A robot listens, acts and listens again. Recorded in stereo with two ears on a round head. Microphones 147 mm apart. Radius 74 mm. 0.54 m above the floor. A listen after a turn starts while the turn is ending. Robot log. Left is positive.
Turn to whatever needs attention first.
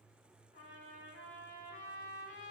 cmd idle
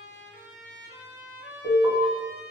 note: The alarm: about 65° right or 115° right.
cmd yaw -65
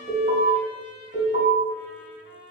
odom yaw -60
note: So it is at 50° right.
cmd yaw -50
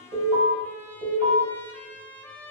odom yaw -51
end: Facing the alarm.